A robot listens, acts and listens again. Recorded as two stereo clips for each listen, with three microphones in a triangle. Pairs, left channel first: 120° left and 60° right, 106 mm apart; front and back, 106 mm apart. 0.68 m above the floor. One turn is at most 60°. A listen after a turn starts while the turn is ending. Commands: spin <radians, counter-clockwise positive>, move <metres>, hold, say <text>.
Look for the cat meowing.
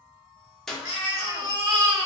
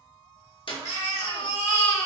spin 1.05
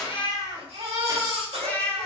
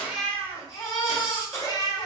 spin 0.70
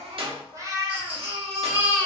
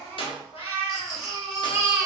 spin -0.26
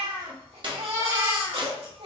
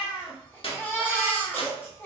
spin -0.26
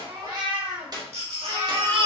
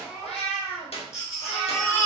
spin -0.17
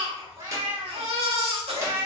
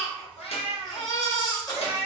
say Facing the cat meowing.